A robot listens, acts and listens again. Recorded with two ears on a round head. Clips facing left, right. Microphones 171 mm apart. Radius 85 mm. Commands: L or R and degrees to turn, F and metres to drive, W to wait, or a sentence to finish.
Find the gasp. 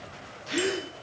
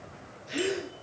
L90
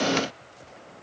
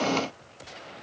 I heard a gasp from this way, but can't make it out now.